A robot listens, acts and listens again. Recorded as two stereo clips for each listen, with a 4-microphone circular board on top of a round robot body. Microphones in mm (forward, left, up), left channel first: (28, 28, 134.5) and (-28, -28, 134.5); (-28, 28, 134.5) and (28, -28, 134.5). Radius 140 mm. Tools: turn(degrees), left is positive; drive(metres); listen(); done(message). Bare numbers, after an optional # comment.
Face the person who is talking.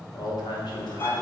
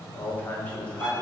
# The man speaking: 55° left.
turn(55)
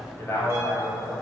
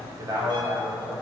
# The man speaking is now 15° right.
turn(-15)
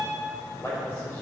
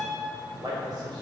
# The man speaking is now 15° right.
turn(-15)
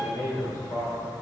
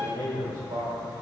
# The man speaking is now 10° right.
turn(-10)
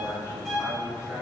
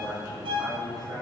done("Facing the man speaking, over 4 m away.")